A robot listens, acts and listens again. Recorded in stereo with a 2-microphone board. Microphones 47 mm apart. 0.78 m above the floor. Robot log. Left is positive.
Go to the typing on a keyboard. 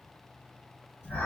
cmd idle
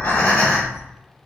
cmd idle
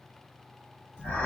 end: I can't make out typing on a keyboard to turn to.